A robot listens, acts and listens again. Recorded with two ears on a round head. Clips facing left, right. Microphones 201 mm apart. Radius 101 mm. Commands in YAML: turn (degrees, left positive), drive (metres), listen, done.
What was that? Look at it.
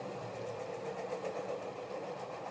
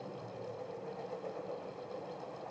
listen: true
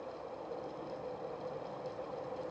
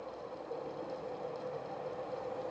listen: true
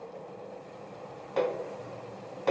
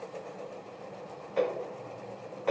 turn: 55
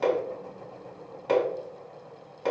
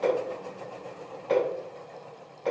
turn: 65
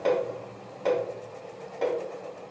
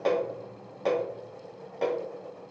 done: "Facing the hammering."